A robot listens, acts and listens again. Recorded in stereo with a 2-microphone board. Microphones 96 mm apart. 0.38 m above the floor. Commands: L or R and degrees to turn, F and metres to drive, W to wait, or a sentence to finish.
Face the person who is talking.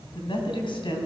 L60
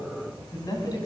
L45
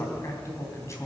L35
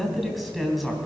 Facing the man speaking, 2 to 4 m away.